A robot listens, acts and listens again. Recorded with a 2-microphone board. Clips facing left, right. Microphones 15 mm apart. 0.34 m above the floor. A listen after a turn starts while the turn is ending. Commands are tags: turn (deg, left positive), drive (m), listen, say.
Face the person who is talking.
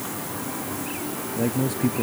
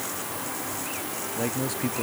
<turn deg="-20"/>
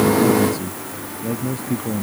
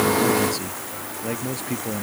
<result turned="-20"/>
<turn deg="-140"/>
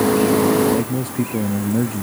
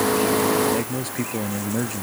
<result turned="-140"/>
<turn deg="-15"/>
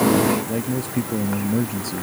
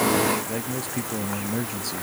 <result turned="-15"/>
<say>Found it: a man speaking, straight ahead.</say>